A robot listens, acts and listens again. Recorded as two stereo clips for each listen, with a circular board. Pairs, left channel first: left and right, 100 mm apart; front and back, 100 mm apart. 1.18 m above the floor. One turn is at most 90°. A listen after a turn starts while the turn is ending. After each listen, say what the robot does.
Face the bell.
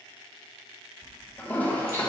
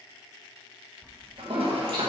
Turn 75° right.
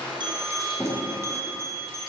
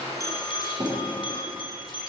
Turn 30° right.
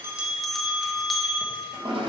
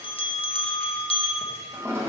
Found it: a bell, straight ahead.